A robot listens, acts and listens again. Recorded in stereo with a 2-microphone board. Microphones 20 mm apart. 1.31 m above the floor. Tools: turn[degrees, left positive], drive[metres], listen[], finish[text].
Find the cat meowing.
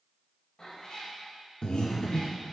Thought: The cat meowing: about 30° left or 150° left.
Action: turn[30]
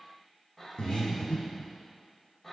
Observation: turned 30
Action: finish[Found it: a cat meowing, straight ahead, 1 to 2 m away.]